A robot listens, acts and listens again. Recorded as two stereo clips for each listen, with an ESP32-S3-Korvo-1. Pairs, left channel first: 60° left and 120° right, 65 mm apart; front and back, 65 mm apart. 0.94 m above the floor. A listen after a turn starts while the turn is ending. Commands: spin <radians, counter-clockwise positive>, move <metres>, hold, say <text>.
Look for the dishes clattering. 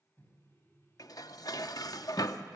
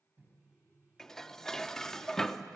spin 1.48
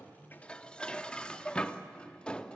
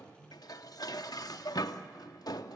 spin -0.26
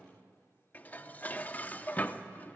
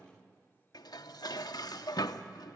say Found it: dishes clattering, straight ahead, under 1 m away.